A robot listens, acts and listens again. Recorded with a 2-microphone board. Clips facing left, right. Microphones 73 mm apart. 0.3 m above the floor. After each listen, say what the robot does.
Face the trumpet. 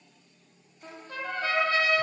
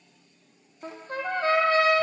Turn 35° right.
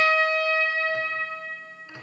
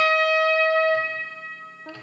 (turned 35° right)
Turn 115° right.
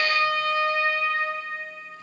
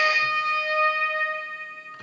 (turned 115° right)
Turn 15° right.
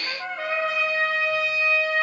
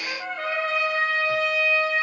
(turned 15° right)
Found it: a trumpet, straight ahead.